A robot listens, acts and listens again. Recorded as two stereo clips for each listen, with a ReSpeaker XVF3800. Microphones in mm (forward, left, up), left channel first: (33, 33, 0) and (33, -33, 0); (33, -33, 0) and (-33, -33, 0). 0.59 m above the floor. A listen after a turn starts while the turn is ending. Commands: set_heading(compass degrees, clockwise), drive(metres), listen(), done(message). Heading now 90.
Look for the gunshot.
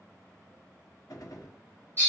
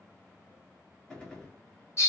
set_heading(10)
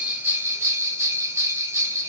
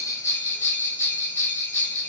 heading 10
done("I heard a gunshot from this way, but can't make it out now.")